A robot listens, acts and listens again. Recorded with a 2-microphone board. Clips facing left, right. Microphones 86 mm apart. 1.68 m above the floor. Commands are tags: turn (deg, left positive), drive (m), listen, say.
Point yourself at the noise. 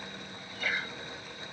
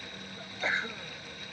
<turn deg="-25"/>
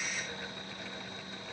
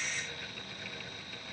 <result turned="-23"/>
<listen/>
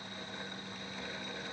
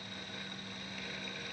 <say>I heard a sneeze, but can't make it out now. It was about straight ahead or 130° right.</say>